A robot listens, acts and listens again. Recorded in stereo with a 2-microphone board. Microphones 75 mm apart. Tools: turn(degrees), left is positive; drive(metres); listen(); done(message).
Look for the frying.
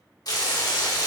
turn(degrees=60)
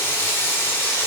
turn(degrees=35)
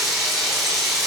done("Found it: frying, straight ahead.")